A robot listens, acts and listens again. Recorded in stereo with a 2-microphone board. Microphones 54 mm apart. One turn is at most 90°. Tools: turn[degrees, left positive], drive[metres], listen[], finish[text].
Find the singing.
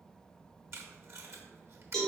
Action: listen[]
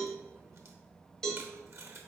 Action: listen[]
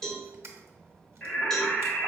Thought: The singing: about 40° left or 140° left.
Action: turn[40]
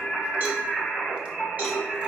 Thought: So it is at 10° left.
Action: turn[10]
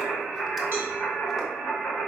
Action: finish[Facing the singing.]